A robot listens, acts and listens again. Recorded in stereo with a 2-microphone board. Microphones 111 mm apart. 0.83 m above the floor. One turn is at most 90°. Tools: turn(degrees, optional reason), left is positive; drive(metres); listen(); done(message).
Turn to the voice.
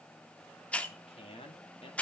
turn(degrees=60, reason="The man speaking: about 60° left or 120° left.")
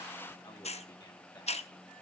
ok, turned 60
listen()
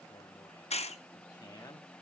turn(degrees=35, reason="So it is at 35° left.")
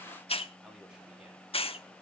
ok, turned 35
listen()
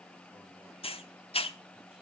listen()
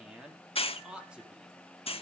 turn(degrees=-10, reason="The man speaking is now 10° right.")
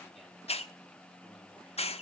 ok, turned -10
listen()
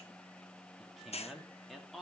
done("Found it: a man speaking, straight ahead, 2 to 4 m away.")